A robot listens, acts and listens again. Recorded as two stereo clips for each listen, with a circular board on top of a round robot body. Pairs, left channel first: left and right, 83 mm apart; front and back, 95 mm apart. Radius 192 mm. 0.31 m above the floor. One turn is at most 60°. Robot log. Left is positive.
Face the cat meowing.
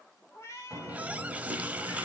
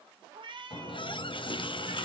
note: The cat meowing: 145° left.
cmd yaw +60
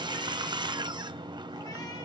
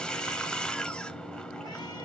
note: Nothing new. It was at 85° left.
cmd yaw +60
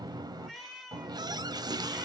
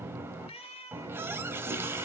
end: Facing the cat meowing.